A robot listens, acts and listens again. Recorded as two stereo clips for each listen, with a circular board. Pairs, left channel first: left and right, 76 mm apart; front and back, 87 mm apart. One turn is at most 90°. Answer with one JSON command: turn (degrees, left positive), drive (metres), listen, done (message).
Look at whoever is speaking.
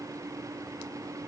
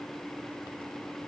{"listen": true}
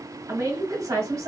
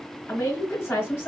{"turn": -55}
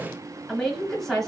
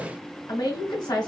{"done": "Facing the woman speaking."}